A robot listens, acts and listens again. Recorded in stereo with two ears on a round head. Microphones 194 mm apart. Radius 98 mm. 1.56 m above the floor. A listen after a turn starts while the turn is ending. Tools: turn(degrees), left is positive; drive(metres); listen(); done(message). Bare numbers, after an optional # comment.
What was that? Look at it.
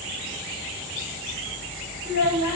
# The child speaking: about 55° left or 125° left.
turn(55)
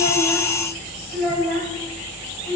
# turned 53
done("Facing the child speaking.")